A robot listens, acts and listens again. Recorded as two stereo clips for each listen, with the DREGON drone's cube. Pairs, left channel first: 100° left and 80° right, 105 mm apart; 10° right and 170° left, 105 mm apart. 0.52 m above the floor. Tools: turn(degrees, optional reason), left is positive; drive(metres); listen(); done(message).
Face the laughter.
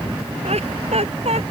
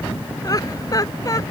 turn(degrees=-65, reason="The laughter: 65° right.")
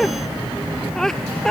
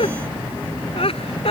turn(degrees=15, reason="The laughter is now 15° left.")
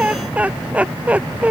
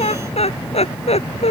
done("Facing the laughter.")